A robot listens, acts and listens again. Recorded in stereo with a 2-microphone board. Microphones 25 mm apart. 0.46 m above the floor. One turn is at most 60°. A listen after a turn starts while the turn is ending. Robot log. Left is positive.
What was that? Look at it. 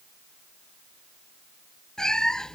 note: The cat meowing: about 30° left or 150° left.
cmd yaw +30
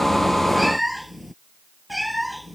end: Facing the cat meowing.